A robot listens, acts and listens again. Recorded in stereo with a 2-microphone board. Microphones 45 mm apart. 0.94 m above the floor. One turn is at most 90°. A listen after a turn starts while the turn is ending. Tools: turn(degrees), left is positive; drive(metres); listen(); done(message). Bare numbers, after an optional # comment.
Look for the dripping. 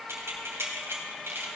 listen()
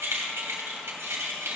listen()
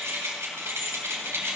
done("I can't make out dripping to turn to.")